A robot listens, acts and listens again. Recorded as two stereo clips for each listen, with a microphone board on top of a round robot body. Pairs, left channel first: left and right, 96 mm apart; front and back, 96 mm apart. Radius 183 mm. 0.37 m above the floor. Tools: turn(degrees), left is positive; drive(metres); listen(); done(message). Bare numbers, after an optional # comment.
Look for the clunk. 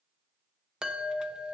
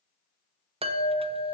listen()
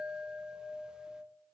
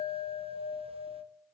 listen()
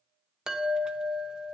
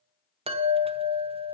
done("I can't make out a clunk to turn to.")